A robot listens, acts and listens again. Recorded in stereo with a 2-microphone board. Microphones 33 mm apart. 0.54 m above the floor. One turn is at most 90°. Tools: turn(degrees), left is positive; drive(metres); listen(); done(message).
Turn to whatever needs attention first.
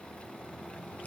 listen()
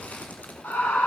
turn(degrees=90)
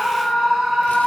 done("Facing the scream.")